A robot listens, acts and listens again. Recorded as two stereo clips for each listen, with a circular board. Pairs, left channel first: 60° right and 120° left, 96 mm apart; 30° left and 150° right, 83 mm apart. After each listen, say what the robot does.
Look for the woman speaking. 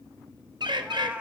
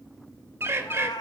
Keep listening.
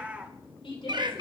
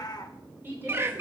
Turn 85° right.
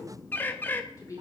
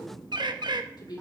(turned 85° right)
Found it: a woman speaking, straight ahead.